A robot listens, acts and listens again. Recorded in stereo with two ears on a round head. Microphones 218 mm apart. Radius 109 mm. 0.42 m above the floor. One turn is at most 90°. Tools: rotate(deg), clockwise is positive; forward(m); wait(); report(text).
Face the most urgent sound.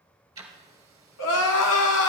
rotate(-70)
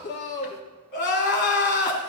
rotate(-45)
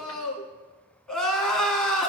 report("Found it: crying, straight ahead, 1 to 2 m away.")